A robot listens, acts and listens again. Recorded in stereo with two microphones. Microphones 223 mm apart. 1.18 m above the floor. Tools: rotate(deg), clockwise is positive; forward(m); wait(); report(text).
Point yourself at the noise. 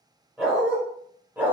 rotate(30)
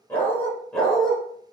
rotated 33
rotate(-30)
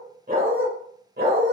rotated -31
rotate(50)
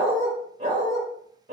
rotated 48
rotate(35)
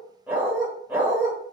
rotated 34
report("Facing the dog barking, 1 to 2 m away.")